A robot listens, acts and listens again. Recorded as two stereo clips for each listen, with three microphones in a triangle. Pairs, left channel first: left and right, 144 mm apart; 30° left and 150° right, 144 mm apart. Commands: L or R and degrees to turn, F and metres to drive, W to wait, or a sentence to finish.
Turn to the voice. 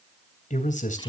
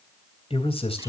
L75
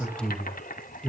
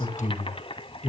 Facing the man speaking, 2 to 4 m away.